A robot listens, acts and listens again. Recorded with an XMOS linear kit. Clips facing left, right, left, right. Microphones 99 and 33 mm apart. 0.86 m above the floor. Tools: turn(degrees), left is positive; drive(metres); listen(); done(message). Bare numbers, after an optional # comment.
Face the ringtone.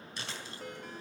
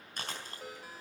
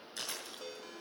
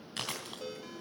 turn(-30)
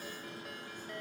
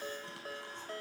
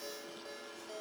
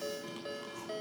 # So it is at 145° right.
turn(-145)
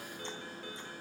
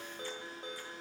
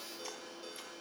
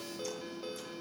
# The ringtone is now 20° right.
turn(-20)
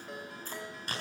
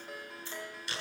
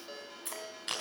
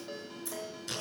done("Found it: a ringtone, straight ahead.")